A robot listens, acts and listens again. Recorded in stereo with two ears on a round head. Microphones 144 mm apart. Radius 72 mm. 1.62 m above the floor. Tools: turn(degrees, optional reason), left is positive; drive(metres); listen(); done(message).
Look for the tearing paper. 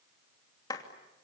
listen()
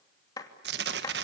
turn(degrees=-75, reason="The tearing paper: about 75° right or 105° right.")
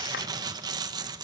turn(degrees=-25, reason="So it is at 25° right.")
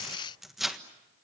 done("Found it: tearing paper, straight ahead, 1 to 2 m away.")